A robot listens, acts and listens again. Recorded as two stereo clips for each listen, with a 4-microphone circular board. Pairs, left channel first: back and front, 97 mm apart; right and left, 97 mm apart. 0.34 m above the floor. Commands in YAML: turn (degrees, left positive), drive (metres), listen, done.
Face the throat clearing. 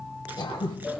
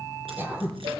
turn: 155
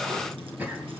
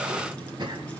turn: 70
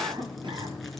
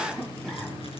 turn: -10
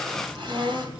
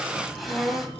done: "Found it: throat clearing, straight ahead."